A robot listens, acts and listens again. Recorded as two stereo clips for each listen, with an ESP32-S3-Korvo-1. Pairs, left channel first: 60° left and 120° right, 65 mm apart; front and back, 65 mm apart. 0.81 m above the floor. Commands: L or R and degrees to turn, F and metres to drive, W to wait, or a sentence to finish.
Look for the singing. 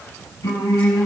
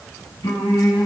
L20
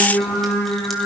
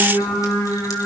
Found it: singing, straight ahead, over 4 m away.